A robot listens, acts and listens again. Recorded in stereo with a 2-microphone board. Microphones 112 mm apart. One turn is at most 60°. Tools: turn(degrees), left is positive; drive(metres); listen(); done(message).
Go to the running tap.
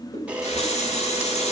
turn(degrees=60)
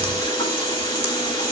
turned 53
turn(degrees=35)
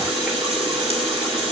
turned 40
drive(metres=1.0)
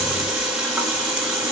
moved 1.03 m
turn(degrees=-10)
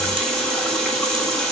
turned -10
drive(metres=1.0)
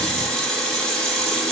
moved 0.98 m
drive(metres=1.0)
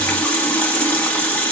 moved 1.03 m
turn(degrees=10)
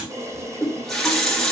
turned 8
drive(metres=1.0)
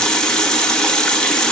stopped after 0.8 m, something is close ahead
done("I am next to the running tap.")